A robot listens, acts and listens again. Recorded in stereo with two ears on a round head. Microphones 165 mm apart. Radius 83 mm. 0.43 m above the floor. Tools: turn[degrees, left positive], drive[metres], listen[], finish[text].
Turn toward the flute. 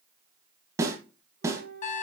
Thought: The flute: about 55° right or 125° right.
Action: turn[-55]
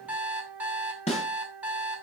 Thought: So it is at 10° right.
Action: turn[-10]
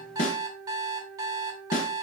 Action: finish[Facing the flute, 2 to 4 m away.]